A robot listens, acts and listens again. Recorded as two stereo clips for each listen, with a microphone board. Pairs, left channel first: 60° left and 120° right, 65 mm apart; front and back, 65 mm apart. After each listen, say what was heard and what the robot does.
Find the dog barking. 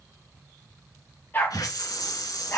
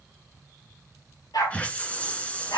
Facing the dog barking.